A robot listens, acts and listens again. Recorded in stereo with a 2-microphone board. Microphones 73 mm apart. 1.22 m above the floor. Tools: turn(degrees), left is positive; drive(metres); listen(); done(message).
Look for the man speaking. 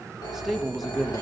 turn(degrees=30)
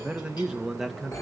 turn(degrees=30)
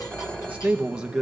turn(degrees=-30)
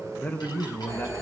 turn(degrees=30)
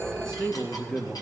turn(degrees=15)
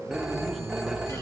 listen()
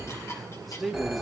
done("Found it: a man speaking, straight ahead, 2 to 4 m away.")